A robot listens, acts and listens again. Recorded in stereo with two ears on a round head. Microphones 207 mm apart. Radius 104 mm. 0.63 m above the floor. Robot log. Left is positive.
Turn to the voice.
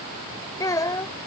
note: The child speaking: about 15° left or 165° left.
cmd yaw +15
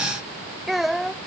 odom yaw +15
end: Facing the child speaking.